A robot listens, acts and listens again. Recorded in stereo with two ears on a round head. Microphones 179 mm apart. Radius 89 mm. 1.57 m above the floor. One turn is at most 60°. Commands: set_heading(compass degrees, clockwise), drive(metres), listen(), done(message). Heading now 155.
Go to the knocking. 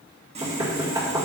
set_heading(175)
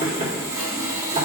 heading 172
set_heading(232)
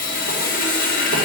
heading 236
set_heading(296)
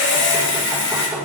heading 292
set_heading(317)
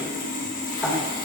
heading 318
drive(1.0)
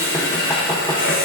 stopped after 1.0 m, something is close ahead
listen()
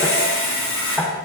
set_heading(308)
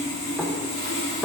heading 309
done("I am next to the knocking.")